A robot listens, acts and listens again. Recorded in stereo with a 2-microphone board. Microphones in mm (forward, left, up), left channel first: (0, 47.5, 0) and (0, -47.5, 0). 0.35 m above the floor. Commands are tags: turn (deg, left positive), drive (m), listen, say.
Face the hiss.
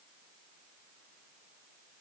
<listen/>
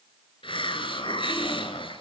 <turn deg="65"/>
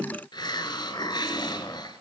<turn deg="50"/>
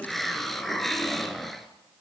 <say>Found it: a hiss, straight ahead.</say>